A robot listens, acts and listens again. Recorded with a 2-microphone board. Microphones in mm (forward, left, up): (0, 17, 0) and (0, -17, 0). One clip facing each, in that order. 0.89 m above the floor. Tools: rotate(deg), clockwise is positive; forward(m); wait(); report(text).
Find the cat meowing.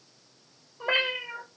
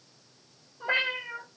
rotate(-45)
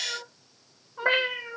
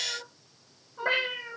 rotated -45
rotate(-20)
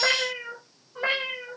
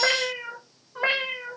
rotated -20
rotate(20)
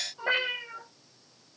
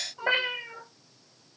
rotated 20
rotate(25)
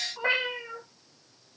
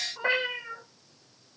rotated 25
report("Found it: a cat meowing, straight ahead.")